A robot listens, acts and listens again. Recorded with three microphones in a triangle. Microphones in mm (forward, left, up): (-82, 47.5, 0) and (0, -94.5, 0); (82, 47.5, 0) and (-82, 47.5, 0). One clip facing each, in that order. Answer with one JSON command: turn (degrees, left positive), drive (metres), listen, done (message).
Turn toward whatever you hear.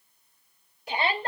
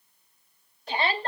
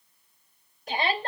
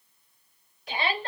{"turn": 40}
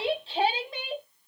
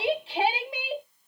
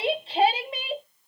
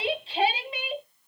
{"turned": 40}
{"turn": 15}
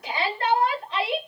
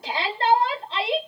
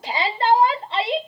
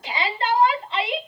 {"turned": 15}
{"done": "Found it: a shout, straight ahead."}